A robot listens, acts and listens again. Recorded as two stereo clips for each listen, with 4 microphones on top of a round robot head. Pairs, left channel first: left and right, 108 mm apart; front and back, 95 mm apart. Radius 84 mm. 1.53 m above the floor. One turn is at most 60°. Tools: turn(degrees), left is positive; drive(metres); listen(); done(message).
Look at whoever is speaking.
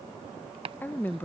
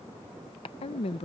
turn(degrees=15)
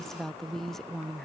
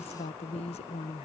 done("Found it: a woman speaking, straight ahead.")